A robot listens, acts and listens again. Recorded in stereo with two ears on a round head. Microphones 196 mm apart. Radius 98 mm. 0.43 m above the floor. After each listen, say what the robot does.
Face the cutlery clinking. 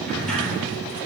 Keep listening.
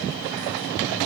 Keep listening.
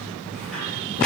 I can't make out cutlery clinking to turn to.